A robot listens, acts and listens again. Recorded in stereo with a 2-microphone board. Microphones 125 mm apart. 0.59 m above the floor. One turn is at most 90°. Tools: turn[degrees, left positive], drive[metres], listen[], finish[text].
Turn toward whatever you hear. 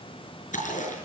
Action: turn[90]
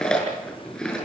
Action: finish[Found it: chewing, straight ahead, over 4 m away.]